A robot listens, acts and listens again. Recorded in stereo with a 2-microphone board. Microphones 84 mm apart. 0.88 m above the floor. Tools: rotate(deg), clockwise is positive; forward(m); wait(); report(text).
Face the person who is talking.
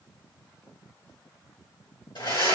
wait()
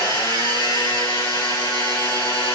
wait()
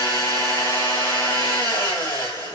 report("I can't make out anyone speaking, only a blender.")